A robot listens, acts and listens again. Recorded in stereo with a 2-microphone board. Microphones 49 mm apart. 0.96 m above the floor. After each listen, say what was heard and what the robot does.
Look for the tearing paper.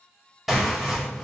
Turn 30° right.
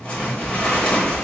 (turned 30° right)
So it is at 20° left. Turn 20° left.
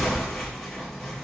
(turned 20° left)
Found it: tearing paper, straight ahead.